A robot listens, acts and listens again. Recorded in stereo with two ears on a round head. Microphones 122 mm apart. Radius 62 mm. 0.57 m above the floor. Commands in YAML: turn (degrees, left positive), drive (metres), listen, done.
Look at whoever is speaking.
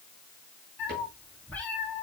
listen: true
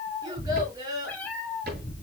turn: -30
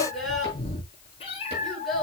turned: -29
done: "Found it: a child speaking, straight ahead, over 4 m away."